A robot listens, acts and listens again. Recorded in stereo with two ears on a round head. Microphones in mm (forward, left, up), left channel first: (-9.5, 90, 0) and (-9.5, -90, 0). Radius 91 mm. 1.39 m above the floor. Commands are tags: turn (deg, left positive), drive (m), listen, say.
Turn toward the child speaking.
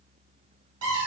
<listen/>
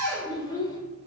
<turn deg="20"/>
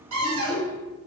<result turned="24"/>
<turn deg="135"/>
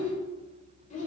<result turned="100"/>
<turn deg="40"/>
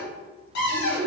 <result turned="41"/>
<say>Facing the child speaking.</say>